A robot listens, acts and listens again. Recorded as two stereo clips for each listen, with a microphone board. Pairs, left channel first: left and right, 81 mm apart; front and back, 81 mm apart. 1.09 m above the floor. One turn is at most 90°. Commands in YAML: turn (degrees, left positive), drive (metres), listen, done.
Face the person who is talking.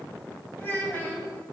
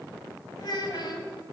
turn: 25
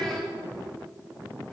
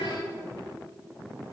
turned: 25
turn: 10
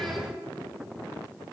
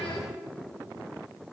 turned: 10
listen: true
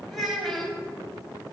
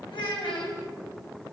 done: "Found it: a child speaking, straight ahead."